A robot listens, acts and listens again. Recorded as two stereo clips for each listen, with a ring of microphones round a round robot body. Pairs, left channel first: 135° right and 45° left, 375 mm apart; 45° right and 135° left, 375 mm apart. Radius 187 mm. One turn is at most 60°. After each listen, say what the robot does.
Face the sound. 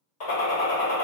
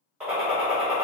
Turn 60° right.
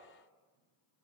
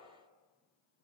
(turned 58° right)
Turn 60° right.
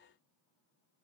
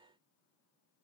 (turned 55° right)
Turn 25° right.
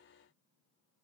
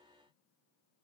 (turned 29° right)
I heard a gunshot from this way, but can't make it out now.